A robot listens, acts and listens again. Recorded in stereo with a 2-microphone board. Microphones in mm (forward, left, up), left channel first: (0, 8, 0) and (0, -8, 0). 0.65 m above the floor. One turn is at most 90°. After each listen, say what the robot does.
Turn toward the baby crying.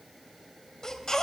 Turn 40° left.
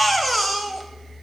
Found it: a baby crying, straight ahead, 1 to 2 m away.